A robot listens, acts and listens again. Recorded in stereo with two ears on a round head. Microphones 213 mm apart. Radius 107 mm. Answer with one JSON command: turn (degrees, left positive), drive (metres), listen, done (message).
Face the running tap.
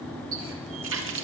{"turn": -60}
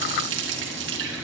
{"turn": -55}
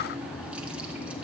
{"listen": true}
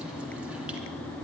{"listen": true}
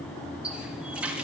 {"done": "Found it: a running tap, straight ahead."}